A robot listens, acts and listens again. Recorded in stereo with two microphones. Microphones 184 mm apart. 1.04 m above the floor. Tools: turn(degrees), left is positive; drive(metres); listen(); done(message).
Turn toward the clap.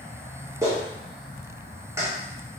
turn(degrees=-30)
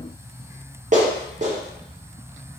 turn(degrees=-135)
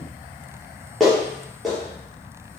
done("Found it: a clap, straight ahead.")